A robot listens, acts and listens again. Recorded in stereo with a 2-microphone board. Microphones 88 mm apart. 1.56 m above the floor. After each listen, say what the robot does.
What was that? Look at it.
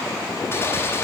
Turn 30° left.
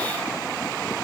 Keep listening.
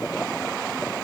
I heard a gunshot, but can't make it out now. It was about straight ahead or 120° left.